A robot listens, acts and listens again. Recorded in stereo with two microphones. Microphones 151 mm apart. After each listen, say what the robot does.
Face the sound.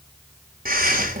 Turn 75° right.
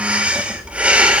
Turn 10° right.
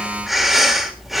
Facing the breathing.